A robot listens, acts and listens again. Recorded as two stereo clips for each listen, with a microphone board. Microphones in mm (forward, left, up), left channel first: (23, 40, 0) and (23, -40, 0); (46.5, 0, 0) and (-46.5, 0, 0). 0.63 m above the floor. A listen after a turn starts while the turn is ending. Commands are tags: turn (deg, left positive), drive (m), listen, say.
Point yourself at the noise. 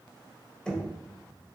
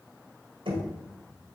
<turn deg="175"/>
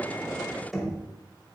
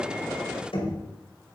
<say>Found it: knocking, straight ahead.</say>